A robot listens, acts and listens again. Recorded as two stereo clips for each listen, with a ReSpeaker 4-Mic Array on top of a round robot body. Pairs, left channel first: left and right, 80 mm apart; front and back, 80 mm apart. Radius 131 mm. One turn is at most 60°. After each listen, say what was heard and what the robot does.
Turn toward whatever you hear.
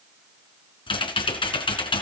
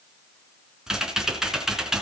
The typing on a keyboard: 95° left. Turn 60° left.
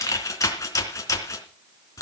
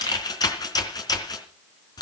The typing on a keyboard is now 40° left. Turn 40° left.
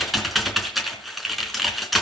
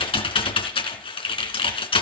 Facing the typing on a keyboard, 2 to 4 m away.